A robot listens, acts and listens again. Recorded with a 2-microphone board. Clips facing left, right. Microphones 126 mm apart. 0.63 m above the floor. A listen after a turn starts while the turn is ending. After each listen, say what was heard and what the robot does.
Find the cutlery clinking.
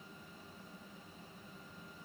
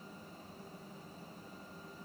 Keep listening.
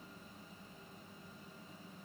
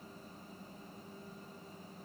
Keep listening.
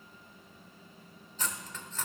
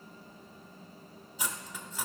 Turn 30° right.
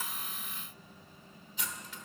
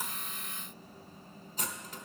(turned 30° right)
So it is at 135° right. Turn 135° right.
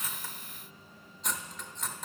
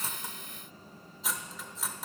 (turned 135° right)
Facing the cutlery clinking.